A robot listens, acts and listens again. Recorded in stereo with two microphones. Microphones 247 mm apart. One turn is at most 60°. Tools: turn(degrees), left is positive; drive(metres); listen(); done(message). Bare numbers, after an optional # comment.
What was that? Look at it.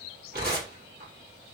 # The tearing paper: about 40° right or 140° right.
turn(-40)
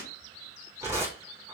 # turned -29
# So it is at 10° right.
turn(-10)
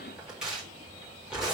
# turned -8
done("Found it: tearing paper, straight ahead, 2 to 4 m away.")